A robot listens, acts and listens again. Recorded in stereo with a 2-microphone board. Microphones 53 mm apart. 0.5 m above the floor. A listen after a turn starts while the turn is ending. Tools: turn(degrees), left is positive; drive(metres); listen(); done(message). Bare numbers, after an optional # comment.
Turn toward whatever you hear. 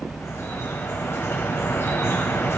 # The dripping: about 55° left or 125° left.
turn(55)
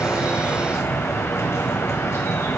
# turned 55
# So it is at 65° left.
turn(65)
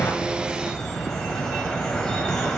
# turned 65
# The dripping is now 10° left.
turn(10)
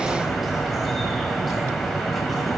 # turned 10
done("Found it: dripping, straight ahead, 2 to 4 m away.")